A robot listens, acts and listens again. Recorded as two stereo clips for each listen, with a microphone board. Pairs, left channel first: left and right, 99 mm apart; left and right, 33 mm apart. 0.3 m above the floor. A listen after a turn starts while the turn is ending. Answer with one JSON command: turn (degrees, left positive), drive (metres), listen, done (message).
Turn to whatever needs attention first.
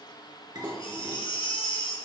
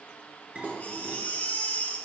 {"turn": 55}
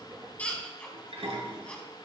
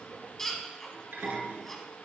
{"turn": 10}
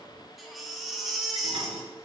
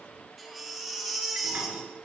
{"done": "Found it: a baby crying, straight ahead."}